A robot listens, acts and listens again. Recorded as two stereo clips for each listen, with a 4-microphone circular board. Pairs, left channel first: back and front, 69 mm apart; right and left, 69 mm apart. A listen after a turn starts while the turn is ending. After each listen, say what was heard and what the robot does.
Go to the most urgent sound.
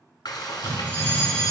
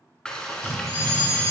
The fire alarm: 115° right. Turn 115° right.
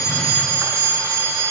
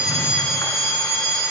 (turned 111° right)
Drive 1.0 m forward.
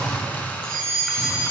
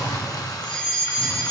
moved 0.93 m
The fire alarm is now 15° right. Turn 15° right.
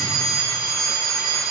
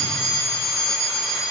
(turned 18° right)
Drive 1.0 m forward.
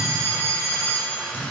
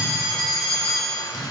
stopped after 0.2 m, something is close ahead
Arrived at the fire alarm, straight ahead.